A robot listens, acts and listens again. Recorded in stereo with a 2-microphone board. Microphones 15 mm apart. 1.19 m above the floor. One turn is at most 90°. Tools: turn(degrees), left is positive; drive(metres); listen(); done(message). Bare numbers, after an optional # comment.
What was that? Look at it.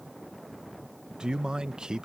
# The man speaking: about 70° right or 110° right.
turn(-70)
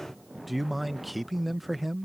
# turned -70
done("Facing the man speaking.")